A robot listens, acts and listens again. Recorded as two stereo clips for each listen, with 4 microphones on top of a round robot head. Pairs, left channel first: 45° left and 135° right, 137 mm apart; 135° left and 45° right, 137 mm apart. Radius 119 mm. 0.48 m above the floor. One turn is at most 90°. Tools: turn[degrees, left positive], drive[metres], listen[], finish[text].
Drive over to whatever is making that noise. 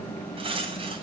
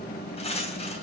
Thought: The cutlery clinking: straight behind.
Action: turn[90]
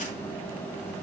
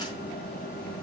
Thought: Nothing new. It was at 90° left.
Action: turn[90]
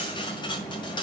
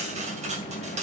Thought: The cutlery clinking is now 10° right.
Action: turn[-10]
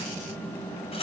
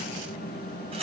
Action: drive[1.0]
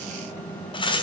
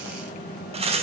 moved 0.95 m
Action: drive[1.0]
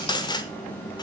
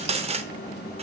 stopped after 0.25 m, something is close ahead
Thought: The cutlery clinking is now 10° right.
Action: turn[-10]
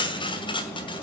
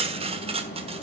Action: finish[Arrived at the cutlery clinking, straight ahead.]